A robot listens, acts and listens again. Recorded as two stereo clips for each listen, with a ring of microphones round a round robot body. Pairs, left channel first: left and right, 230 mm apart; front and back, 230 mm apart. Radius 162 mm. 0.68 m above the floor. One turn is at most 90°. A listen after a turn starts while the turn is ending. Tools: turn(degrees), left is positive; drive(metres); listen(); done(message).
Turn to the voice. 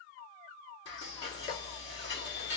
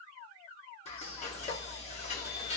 listen()
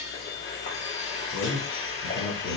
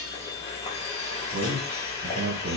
turn(degrees=90)
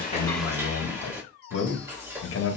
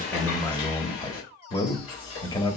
turn(degrees=70)
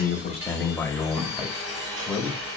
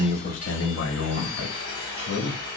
turn(degrees=10)
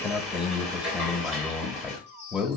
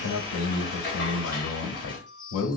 done("Facing the man speaking, 1 to 2 m away.")